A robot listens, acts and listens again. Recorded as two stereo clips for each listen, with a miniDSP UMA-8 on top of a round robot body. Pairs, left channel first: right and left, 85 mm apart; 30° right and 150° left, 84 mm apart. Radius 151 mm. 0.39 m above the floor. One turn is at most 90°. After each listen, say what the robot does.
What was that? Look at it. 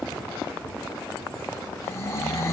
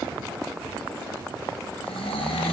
Turn 30° right.
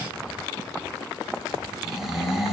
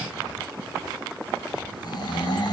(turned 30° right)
Found it: snoring, straight ahead.